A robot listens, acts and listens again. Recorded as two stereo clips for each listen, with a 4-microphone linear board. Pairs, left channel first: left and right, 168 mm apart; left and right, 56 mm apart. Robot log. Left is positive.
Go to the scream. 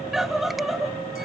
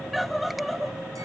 cmd yaw +30
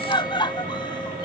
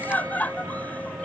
note: So it is at 150° left.
cmd yaw +150
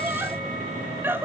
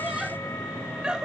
note: The scream is now 15° right.
cmd yaw -15
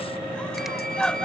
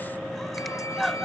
cmd fwd 1.0
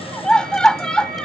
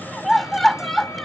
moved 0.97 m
cmd fwd 1.0
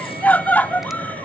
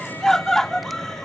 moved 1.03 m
note: The scream is now 10° left.
cmd yaw +10
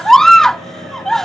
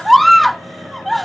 cmd fwd 1.0
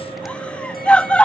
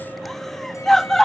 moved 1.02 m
note: The scream is now 10° left.
cmd yaw +10
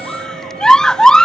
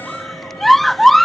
cmd fwd 1.0
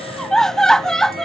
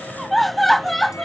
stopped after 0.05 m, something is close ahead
end: I am next to the scream.